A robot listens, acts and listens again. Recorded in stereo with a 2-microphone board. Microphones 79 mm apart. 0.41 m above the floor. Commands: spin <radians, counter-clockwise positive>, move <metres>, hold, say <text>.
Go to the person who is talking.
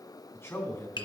spin 0.52
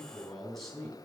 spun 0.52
move 1.0
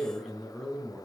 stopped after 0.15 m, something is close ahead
say Something is in my way. I am facing the man speaking but have not reached it.